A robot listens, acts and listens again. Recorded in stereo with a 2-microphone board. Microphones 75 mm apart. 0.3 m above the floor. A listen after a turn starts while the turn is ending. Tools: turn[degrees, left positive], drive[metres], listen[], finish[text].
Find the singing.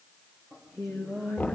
Action: turn[-30]
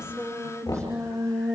Thought: So it is at 140° right.
Action: turn[-140]
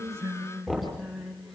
Action: finish[Found it: singing, straight ahead.]